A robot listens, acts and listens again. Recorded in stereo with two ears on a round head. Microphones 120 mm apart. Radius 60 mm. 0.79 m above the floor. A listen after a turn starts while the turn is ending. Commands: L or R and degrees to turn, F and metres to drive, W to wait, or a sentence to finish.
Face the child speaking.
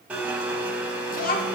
L70
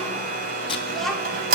Found it: a child speaking, straight ahead.